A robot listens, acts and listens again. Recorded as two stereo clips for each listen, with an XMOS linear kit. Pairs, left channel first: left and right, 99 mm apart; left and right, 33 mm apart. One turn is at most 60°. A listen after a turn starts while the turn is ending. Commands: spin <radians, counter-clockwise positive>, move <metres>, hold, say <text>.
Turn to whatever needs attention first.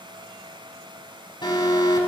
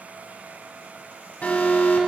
spin 0.87
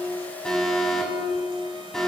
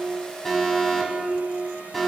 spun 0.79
say Found it: an alarm, straight ahead, over 4 m away.